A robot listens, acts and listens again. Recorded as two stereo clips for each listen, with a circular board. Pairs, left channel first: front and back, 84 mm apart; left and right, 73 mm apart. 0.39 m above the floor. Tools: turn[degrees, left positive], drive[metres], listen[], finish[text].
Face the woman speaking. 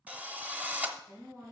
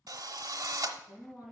Thought: The woman speaking: 125° left.
Action: turn[125]
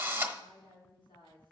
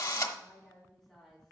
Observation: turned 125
Action: finish[Facing the woman speaking, 2 to 4 m away.]